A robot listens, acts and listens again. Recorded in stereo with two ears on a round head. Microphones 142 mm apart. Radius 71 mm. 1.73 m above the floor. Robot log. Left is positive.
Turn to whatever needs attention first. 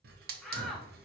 cmd yaw +30
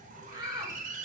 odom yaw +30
note: So it is at 25° right.
cmd yaw -25
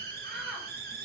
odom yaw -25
cmd idle
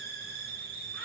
cmd idle
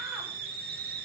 end: I heard a shout from this way, but can't make it out now.